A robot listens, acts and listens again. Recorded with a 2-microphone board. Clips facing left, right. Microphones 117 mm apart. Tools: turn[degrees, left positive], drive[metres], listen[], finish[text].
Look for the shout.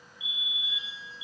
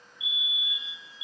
Action: listen[]
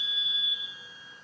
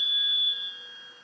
Action: listen[]
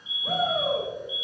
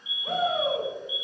Action: turn[30]
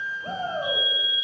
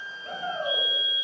Thought: So it is at 140° left.
Action: turn[140]
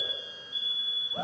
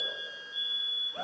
Thought: The shout is now 15° left.
Action: turn[15]
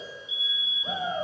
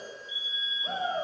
Action: finish[Facing the shout.]